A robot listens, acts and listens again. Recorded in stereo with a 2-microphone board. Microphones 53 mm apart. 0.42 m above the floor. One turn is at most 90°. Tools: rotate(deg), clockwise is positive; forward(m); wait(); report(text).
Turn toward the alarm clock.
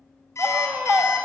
rotate(-55)
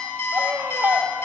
rotate(-65)
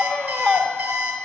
rotate(20)
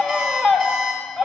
report("Found it: an alarm clock, straight ahead.")